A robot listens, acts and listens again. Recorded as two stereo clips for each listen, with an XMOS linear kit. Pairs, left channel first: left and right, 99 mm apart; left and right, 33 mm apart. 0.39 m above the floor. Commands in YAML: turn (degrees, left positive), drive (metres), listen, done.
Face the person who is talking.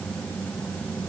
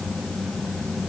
listen: true
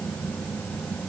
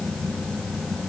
listen: true
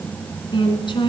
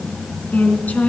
turn: 55
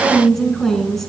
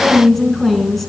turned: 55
done: "Found it: a woman speaking, straight ahead."